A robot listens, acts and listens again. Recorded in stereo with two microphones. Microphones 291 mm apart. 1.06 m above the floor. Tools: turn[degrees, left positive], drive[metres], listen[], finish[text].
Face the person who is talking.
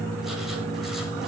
Action: listen[]
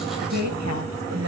Action: turn[-90]
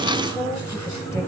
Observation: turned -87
Thought: So it is at 10° left.
Action: turn[10]
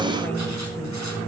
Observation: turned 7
Action: listen[]
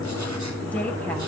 Action: finish[Found it: a woman speaking, straight ahead.]